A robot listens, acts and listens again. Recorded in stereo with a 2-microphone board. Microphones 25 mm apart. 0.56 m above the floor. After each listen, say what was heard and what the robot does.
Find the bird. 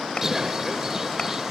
The bird: about 20° right or 160° right. Turn 20° right.
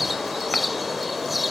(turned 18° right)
Facing the bird.